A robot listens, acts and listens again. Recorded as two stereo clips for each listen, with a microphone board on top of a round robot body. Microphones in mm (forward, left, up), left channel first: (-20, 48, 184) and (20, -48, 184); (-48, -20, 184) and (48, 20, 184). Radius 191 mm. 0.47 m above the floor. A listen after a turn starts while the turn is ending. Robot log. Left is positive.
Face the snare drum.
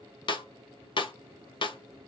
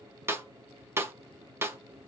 note: The snare drum: 85° left.
cmd yaw +85
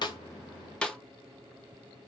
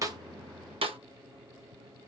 note: The snare drum is now 35° left.
cmd yaw +35
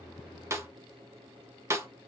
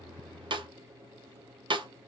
note: The snare drum is now 10° right.
cmd yaw -10
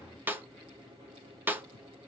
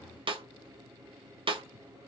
end: Facing the snare drum, 1 to 2 m away.